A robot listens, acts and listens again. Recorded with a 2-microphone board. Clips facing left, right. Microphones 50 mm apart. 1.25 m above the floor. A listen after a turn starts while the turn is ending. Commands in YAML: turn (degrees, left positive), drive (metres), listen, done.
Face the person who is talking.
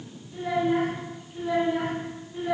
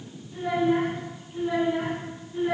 turn: -30
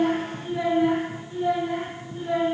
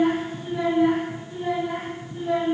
done: "Found it: a child speaking, straight ahead."